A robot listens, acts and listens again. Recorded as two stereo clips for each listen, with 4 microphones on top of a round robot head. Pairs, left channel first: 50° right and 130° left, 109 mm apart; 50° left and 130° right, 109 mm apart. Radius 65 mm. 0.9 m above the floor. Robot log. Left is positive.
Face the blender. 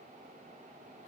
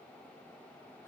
cmd idle
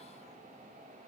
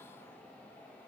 cmd idle
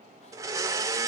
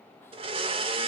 note: The blender: 165° right.
cmd yaw -165
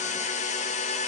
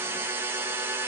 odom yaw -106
note: The blender is now 60° right.
cmd yaw -60
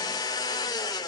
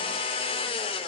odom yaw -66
note: The blender is now 10° left.
cmd yaw +10
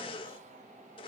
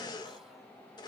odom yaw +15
end: Facing the blender.